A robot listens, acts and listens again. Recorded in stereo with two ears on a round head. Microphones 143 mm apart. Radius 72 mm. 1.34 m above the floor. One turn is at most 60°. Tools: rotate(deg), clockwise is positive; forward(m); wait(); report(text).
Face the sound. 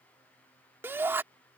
rotate(15)
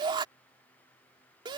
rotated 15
rotate(60)
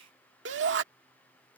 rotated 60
rotate(60)
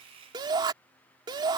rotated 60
rotate(25)
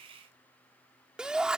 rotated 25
report("Found it: a shout, straight ahead.")